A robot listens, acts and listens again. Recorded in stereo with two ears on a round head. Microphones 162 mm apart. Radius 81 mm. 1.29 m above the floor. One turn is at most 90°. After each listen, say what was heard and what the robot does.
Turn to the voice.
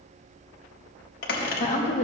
The woman speaking: about 40° left or 140° left. Turn 40° left.
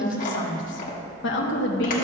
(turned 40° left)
So it is at 105° left. Turn 90° left.
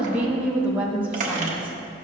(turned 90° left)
The woman speaking is now 10° right. Turn 10° right.
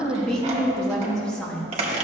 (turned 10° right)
Facing the woman speaking, under 1 m away.